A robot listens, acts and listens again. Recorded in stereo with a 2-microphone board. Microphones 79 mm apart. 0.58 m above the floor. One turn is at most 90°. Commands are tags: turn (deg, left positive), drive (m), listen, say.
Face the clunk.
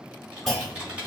<turn deg="30"/>
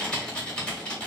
<listen/>
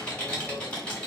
<say>I heard a clunk, but can't make it out now. It was about 25° right or 145° left.</say>